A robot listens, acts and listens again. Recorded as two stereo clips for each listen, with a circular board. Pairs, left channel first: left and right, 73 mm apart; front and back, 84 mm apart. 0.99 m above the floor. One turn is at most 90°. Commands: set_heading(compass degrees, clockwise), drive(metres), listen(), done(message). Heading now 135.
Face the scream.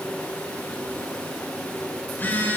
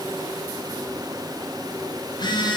listen()
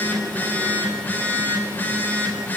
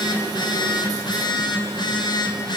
listen()
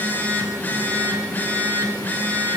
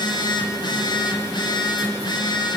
done("I can't make out a scream to turn to.")